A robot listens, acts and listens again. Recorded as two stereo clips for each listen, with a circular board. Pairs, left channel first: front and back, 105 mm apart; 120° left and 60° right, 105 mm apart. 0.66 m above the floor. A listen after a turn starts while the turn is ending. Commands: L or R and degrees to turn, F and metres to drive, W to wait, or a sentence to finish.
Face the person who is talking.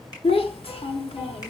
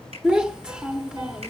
L20
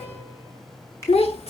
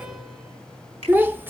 L10
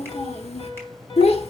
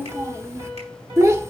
Facing the child speaking, 1 to 2 m away.